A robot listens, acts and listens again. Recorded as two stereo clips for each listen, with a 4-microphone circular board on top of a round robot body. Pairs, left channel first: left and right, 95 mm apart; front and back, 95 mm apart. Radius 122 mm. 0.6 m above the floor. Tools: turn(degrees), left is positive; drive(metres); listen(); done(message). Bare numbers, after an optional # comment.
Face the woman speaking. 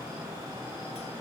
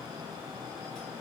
listen()
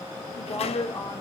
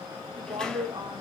# The woman speaking: 145° left.
turn(145)
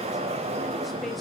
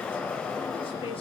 listen()
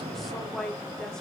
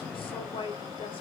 done("Facing the woman speaking.")